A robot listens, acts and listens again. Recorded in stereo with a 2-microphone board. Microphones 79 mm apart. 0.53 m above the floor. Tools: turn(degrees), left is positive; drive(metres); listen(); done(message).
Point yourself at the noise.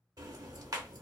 turn(degrees=-55)
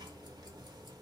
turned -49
turn(degrees=-75)
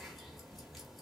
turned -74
done("Facing the ticking.")